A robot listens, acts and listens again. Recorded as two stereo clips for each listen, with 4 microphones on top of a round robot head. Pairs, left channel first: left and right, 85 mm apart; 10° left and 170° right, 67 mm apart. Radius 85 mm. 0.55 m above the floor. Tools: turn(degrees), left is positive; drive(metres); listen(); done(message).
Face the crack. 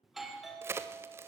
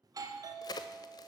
turn(degrees=-30)
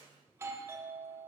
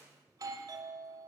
done("Facing where the crack came from. I can't hear it now.")